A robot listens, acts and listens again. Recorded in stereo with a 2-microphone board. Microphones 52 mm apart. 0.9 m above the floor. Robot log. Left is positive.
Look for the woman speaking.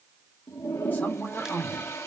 note: The woman speaking: about 35° left or 145° left.
cmd yaw +35
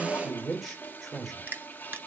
end: Found it: a woman speaking, straight ahead.